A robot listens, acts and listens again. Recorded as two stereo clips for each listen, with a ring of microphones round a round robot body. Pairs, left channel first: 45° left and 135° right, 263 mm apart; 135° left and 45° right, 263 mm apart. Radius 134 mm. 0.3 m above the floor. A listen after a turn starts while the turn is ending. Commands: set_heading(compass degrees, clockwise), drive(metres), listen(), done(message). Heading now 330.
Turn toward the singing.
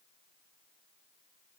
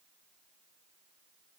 listen()
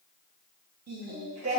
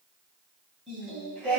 set_heading(110)
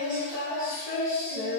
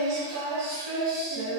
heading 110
set_heading(145)
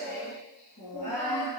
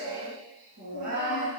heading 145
set_heading(160)
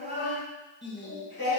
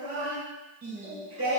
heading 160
done("Facing the singing, 2 to 4 m away.")